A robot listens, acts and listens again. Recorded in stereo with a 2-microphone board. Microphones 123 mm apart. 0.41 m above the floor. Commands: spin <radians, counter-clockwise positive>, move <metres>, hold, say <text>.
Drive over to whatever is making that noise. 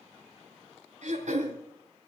spin -1.22
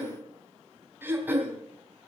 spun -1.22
spin -0.26
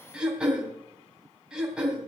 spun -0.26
move 1.0
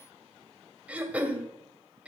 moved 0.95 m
spin -0.17
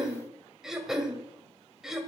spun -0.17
move 1.0
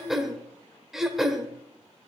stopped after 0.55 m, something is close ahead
say Arrived at the throat clearing, straight ahead.